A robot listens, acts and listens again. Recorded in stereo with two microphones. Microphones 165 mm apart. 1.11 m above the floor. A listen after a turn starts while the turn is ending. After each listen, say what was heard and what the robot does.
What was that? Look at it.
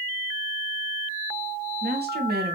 The woman speaking: about 75° right or 105° right. Turn 75° right.
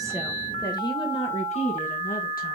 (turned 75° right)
So it is at 45° left. Turn 45° left.
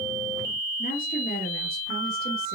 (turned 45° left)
The woman speaking is now 70° left. Turn 70° left.
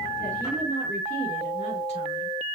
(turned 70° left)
Keep listening.
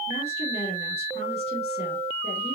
The woman speaking is now 40° left. Turn 40° left.
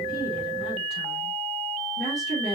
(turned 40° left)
Facing the woman speaking.